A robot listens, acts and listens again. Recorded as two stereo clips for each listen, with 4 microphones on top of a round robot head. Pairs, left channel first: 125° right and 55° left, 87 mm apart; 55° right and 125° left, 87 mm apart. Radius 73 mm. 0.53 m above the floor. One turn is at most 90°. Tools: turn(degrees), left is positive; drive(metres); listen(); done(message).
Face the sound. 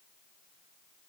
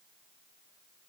listen()
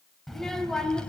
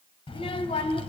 turn(degrees=-45)
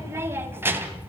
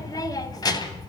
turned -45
turn(degrees=-15)
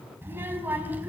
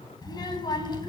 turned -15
turn(degrees=-15)
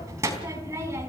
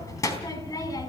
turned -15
done("Found it: a child speaking, straight ahead, over 4 m away.")